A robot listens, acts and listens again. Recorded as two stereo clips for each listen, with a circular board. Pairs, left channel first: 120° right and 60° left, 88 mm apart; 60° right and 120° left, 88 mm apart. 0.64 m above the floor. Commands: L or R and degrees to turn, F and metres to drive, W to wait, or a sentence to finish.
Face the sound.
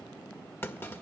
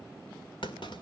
R55
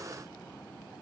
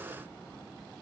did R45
R10
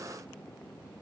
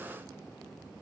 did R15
Facing where the clunk came from. I can't hear it now.